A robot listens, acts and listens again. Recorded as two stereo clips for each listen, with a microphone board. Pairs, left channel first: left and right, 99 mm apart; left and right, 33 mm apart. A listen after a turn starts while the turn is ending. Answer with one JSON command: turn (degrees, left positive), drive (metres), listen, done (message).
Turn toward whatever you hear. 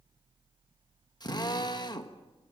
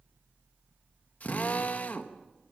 {"turn": 45}
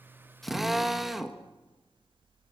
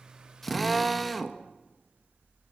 {"done": "Found it: a drill, straight ahead, 1 to 2 m away."}